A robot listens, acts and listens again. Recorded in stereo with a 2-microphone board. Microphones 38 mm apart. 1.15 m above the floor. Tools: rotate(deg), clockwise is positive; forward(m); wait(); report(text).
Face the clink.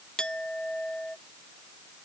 rotate(-20)
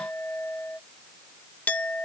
rotate(-140)
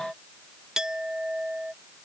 rotate(15)
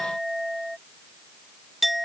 report("Found it: a clink, straight ahead.")